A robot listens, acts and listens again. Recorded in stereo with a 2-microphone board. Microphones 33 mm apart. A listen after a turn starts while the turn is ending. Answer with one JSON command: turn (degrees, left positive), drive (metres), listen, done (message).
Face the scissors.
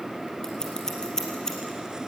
{"turn": 20}
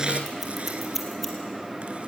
{"done": "Found it: scissors, straight ahead, 2 to 4 m away."}